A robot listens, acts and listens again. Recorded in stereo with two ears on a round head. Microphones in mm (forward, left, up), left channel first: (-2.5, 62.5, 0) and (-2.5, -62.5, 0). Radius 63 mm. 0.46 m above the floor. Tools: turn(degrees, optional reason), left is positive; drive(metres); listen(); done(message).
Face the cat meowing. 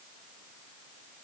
listen()
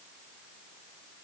listen()
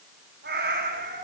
turn(degrees=-90)
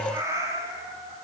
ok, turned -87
turn(degrees=-25, reason="So it is at 25° right.")
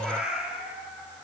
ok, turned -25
done("Facing the cat meowing, over 4 m away.")